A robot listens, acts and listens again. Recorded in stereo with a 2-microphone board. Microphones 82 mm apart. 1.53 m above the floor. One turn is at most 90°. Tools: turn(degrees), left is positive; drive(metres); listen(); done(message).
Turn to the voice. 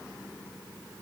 listen()
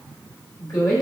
turn(degrees=40)
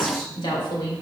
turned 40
turn(degrees=90)
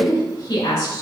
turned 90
turn(degrees=45)
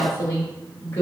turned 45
turn(degrees=30)
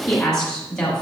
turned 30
turn(degrees=10)
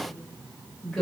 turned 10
done("Found it: a woman speaking, straight ahead.")